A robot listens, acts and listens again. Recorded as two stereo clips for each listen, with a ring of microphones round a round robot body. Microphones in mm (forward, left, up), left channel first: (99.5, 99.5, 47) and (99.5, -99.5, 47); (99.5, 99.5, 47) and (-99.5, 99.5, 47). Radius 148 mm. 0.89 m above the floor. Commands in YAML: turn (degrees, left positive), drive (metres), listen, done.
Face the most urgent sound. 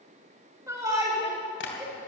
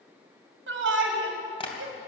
turn: -165
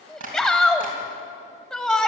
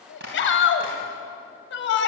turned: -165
done: "Found it: a shout, straight ahead, 1 to 2 m away."